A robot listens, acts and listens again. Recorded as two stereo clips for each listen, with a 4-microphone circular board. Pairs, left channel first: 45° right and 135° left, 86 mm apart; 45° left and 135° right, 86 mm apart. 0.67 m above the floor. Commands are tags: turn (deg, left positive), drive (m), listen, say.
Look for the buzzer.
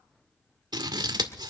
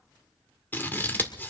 <listen/>
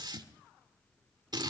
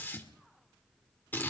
<listen/>
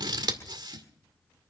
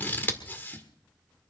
<say>I can't make out a buzzer to turn to.</say>